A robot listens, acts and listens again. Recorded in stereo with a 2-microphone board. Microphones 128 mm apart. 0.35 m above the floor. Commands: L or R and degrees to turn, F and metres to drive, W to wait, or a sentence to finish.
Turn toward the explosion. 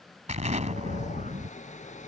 R70
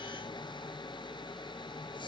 W
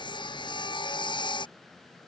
I heard an explosion, but can't make it out now. It was about straight ahead or 40° right.